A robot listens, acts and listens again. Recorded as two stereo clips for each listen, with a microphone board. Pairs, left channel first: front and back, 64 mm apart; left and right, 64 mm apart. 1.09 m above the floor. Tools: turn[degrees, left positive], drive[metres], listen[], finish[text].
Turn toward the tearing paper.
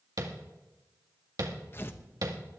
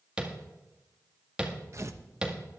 Thought: The tearing paper: 50° right.
Action: turn[-50]
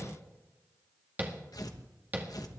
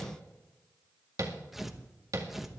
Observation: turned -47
Action: finish[Facing the tearing paper, 1 to 2 m away.]